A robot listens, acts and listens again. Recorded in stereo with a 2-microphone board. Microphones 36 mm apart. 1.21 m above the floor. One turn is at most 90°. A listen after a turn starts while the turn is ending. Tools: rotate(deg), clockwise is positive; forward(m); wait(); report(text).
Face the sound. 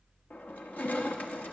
rotate(-45)
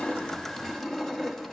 report("Found it: crushing, straight ahead, 1 to 2 m away.")